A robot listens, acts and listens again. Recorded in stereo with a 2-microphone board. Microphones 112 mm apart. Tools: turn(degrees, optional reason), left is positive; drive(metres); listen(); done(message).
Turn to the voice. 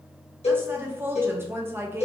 turn(degrees=-20, reason="The woman speaking: about 20° right or 160° right.")
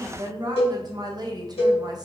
turn(degrees=-140, reason="So it is at 140° right.")
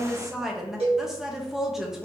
done("Facing the woman speaking, under 1 m away.")